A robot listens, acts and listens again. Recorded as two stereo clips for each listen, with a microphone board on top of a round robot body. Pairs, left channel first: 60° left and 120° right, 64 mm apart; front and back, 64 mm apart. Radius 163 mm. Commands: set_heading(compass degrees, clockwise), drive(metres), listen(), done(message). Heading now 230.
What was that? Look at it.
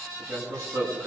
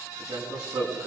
set_heading(35)
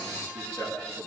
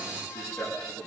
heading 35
set_heading(20)
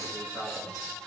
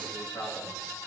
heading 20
done("Facing the man speaking, over 4 m away.")